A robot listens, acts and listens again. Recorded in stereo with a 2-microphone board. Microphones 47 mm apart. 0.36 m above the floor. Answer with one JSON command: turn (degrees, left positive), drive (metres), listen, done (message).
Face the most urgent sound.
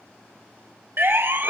{"turn": -45}
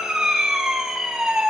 {"done": "Found it: a siren, straight ahead, 2 to 4 m away."}